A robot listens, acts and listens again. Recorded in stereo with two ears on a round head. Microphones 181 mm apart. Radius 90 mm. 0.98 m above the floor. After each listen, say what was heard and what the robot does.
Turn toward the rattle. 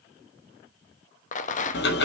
The rattle: about 40° left or 140° left. Turn 40° left.
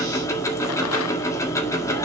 Keep listening.
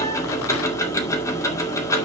Keep listening.
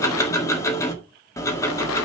I heard a rattle, but can't make it out now. It was about straight ahead or 100° left.